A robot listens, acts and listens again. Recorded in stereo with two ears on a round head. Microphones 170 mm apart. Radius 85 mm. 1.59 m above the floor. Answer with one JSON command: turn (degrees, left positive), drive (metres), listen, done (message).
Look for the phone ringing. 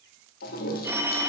{"turn": -30}
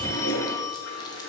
{"turn": 15}
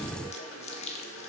{"listen": true}
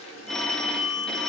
{"done": "Facing the phone ringing, 1 to 2 m away."}